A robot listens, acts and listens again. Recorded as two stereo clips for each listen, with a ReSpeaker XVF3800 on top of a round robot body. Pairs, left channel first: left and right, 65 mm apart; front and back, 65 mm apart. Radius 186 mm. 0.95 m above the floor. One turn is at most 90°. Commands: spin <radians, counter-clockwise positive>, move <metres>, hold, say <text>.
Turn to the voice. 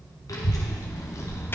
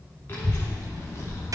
spin 0.70
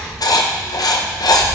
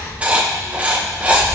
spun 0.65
spin -0.96
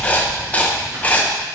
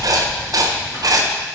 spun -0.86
spin -0.70
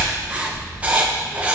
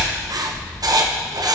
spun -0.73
spin -0.17
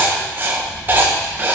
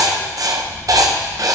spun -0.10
say Facing the child speaking, 2 to 4 m away.